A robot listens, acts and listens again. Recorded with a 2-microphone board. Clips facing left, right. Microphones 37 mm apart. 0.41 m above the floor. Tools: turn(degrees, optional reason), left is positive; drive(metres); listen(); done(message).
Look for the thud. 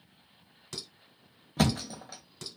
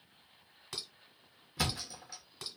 turn(degrees=60, reason="The thud: about 60° left or 120° left.")
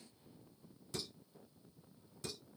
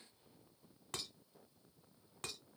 listen()
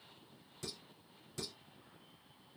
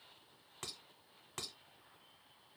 done("I heard a thud, but can't make it out now. It was about straight ahead or 60° left.")